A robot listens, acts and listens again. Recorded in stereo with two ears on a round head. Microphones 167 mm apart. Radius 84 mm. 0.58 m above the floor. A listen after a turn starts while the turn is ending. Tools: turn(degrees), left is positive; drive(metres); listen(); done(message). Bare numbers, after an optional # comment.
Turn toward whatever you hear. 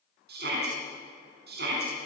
# The shout: about 55° right or 125° right.
turn(-55)
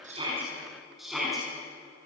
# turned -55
done("Facing the shout, over 4 m away.")